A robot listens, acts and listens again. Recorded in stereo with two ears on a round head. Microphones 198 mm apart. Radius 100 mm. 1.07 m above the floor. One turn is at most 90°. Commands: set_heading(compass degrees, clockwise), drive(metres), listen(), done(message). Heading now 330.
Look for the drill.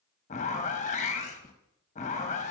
listen()
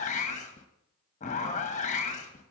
listen()
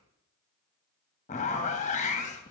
done("I can't make out a drill to turn to.")